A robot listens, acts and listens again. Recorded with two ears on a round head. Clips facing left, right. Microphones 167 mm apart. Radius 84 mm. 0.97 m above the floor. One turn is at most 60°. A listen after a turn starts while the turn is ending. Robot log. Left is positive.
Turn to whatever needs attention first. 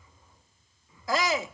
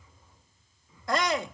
cmd yaw +30
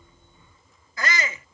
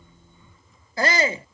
note: So it is at 30° right.
cmd yaw -30
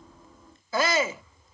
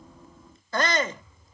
end: Found it: a shout, straight ahead.